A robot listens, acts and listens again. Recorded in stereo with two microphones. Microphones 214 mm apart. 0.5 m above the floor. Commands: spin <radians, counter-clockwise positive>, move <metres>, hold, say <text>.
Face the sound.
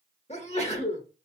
spin 0.52
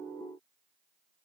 hold
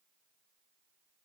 say I heard a sneeze, but can't make it out now. It was about straight ahead or 120° left.